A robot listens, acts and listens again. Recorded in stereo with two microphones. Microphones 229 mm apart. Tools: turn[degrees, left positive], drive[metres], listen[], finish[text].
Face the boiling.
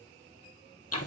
Action: listen[]
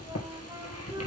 Action: listen[]
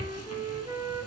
Action: finish[I can't make out boiling to turn to.]